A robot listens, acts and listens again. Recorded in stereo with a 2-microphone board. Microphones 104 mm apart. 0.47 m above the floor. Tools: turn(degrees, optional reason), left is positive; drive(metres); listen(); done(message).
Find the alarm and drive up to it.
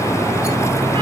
listen()
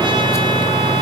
listen()
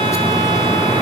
done("I can't make out an alarm.")